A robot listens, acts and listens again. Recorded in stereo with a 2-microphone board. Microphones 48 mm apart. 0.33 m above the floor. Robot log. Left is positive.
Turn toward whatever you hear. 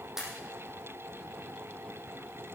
cmd yaw -30
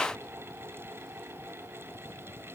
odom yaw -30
cmd idle
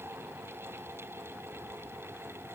end: I heard a pop, but can't make it out now. It was about 20° left or 140° right.